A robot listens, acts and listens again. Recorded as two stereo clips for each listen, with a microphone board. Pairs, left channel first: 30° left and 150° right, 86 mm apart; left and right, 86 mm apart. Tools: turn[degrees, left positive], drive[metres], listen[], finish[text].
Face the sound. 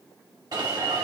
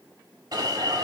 Thought: The alarm: 120° right.
Action: turn[-120]
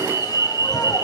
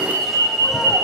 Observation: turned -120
Action: finish[Found it: an alarm, straight ahead.]